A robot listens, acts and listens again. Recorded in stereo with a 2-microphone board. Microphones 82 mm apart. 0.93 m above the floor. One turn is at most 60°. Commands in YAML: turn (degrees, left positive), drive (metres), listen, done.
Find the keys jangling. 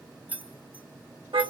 turn: -20
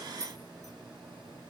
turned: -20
turn: -35
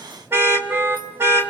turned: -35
listen: true
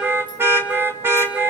listen: true
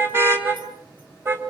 done: "I heard keys jangling, but can't make it out now. It was about straight ahead or 110° right."